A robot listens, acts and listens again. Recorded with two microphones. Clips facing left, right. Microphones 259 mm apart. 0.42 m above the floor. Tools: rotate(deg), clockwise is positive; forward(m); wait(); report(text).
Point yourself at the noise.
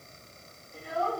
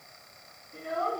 rotate(50)
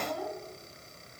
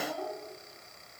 report("Found it: a child speaking, straight ahead, 2 to 4 m away.")